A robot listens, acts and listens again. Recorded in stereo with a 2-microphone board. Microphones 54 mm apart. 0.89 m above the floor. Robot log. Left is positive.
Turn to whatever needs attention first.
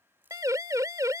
cmd yaw -90
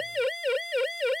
end: Found it: a siren, straight ahead.